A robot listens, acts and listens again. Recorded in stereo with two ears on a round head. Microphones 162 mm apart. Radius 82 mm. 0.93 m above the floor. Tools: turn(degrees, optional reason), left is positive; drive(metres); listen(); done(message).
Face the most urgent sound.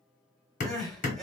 turn(degrees=30)
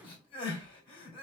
turn(degrees=150, reason="So it is at 150° left.")
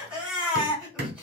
done("Found it: crying, straight ahead.")